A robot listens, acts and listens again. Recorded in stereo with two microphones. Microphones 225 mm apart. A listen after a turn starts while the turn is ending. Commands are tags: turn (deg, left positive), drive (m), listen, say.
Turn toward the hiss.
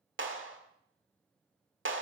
<listen/>
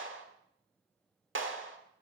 <listen/>
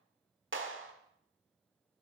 <say>I can't make out a hiss, only a clap.</say>